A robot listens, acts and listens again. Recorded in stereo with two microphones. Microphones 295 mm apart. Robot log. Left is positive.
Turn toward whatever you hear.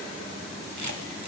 cmd yaw -90
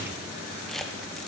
end: Found it: a camera shutter, straight ahead, 1 to 2 m away.